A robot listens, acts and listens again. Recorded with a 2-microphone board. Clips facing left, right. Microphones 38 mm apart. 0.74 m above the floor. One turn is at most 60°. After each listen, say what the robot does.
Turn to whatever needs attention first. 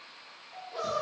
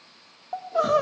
Turn 60° right.
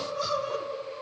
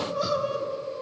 Facing the crying.